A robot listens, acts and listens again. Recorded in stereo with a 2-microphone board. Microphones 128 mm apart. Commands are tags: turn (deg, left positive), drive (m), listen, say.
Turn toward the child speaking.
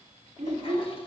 <turn deg="-60"/>
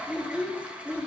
<turn deg="10"/>
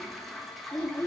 <turn deg="25"/>
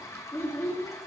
<turn deg="20"/>
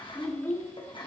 <turn deg="25"/>
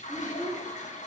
<say>Facing the child speaking, 2 to 4 m away.</say>